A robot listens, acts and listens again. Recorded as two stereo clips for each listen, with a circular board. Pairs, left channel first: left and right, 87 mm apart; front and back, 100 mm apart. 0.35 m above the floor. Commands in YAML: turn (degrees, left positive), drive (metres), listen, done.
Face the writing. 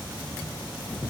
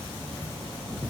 listen: true
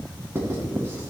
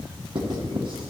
turn: -145
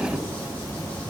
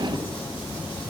listen: true
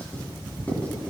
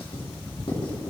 turn: 20
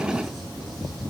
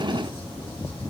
listen: true
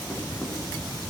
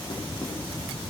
listen: true
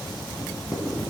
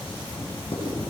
done: "Found it: writing, straight ahead, 2 to 4 m away."